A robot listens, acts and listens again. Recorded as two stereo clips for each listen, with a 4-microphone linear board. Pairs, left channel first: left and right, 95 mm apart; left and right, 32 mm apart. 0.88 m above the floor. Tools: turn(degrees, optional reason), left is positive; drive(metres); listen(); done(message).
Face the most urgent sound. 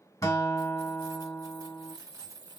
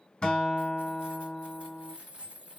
listen()
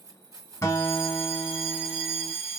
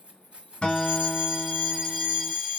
turn(degrees=-30)
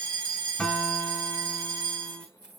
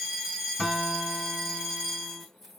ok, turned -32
turn(degrees=-140, reason="So it is at 140° right.")
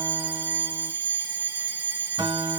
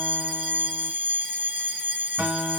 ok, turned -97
turn(degrees=-40, reason="The fire alarm is now 40° right.")
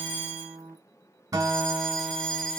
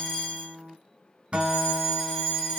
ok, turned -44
done("Facing the fire alarm.")